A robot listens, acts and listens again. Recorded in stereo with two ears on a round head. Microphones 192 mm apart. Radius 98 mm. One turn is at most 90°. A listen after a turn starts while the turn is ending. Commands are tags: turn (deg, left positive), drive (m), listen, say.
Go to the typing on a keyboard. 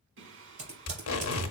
<turn deg="-30"/>
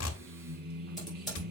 <drive m="1.0"/>
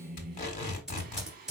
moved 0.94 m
<drive m="1.0"/>
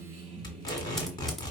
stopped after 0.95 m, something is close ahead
<listen/>
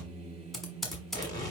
<say>I am next to the typing on a keyboard.</say>